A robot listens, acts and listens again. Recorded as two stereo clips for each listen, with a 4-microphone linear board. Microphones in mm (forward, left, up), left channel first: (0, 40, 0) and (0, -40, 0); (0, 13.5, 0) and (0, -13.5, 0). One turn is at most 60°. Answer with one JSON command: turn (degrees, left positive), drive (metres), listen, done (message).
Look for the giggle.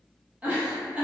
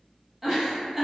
{"turn": -20}
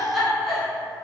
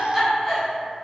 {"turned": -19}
{"done": "Found it: a giggle, straight ahead."}